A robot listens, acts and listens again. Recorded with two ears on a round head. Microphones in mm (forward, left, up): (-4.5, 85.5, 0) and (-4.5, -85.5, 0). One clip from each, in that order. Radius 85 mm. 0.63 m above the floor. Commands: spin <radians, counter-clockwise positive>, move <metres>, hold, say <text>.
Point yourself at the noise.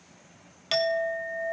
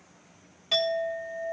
spin 1.05
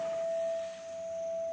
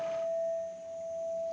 spin 0.96
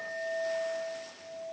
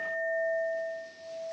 spin 0.26
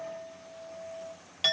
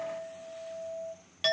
say Facing the clink.